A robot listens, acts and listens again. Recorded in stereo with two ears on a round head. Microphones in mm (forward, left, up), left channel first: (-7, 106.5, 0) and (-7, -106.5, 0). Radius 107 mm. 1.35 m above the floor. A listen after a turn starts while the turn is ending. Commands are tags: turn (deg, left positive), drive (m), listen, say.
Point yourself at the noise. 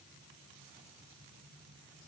<listen/>
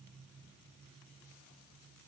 <listen/>
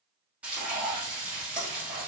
<turn deg="-30"/>
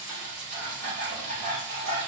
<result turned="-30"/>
<turn deg="-145"/>
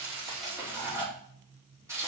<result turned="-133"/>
<turn deg="-10"/>
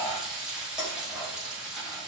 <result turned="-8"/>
<say>Found it: frying, straight ahead, 2 to 4 m away.</say>